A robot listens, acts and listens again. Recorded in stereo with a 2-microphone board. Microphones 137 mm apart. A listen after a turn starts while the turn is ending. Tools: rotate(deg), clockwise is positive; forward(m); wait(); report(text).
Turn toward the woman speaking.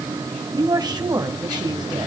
rotate(30)
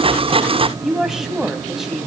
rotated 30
report("Facing the woman speaking, 2 to 4 m away.")